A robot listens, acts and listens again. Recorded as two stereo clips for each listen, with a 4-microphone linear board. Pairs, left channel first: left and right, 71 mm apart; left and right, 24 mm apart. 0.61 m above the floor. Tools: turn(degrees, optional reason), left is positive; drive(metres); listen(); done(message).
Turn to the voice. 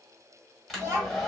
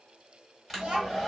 turn(degrees=-35, reason="The child speaking: about 35° right or 145° right.")
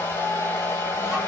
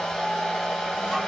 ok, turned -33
listen()
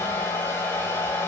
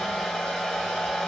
listen()
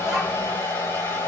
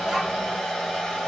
done("I heard a child speaking, but can't make it out now. It was about 5° right or 110° right.")